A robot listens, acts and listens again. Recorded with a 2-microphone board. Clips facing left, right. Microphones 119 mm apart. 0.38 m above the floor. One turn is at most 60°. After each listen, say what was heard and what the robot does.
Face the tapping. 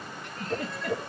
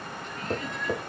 The tapping: about 40° right or 140° right. Turn 40° right.
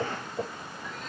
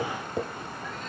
So it is at 100° right. Turn 60° right.
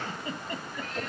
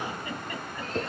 The tapping is now 60° right. Turn 60° right.
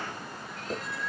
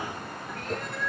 Facing the tapping, 1 to 2 m away.